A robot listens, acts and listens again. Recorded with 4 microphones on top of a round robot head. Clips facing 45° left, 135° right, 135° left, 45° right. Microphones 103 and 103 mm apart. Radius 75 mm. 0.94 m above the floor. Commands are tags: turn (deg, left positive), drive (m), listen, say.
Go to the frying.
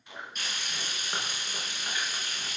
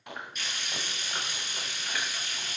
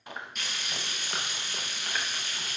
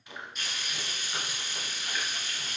<turn deg="100"/>
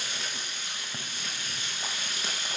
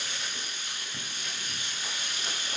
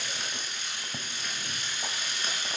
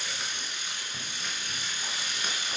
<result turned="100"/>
<turn deg="30"/>
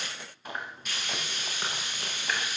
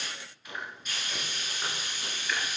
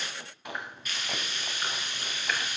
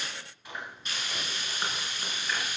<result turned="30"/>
<turn deg="15"/>
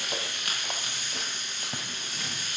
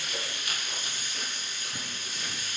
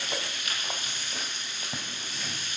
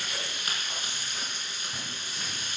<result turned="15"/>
<drive m="1.0"/>
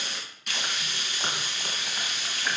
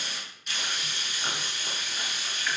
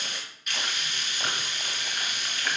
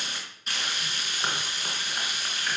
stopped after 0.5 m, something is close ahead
<turn deg="10"/>
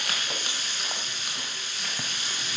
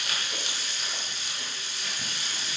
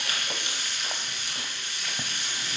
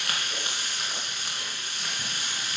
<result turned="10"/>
<say>Something is in my way. I am facing the frying but have not reached it.</say>